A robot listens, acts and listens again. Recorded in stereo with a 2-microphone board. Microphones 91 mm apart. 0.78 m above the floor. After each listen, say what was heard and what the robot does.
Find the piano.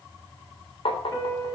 The piano: about 30° left or 150° left. Turn 30° left.
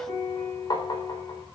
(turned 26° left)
So it is at 120° left. Turn 120° left.
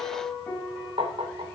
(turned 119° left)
Facing the piano, over 4 m away.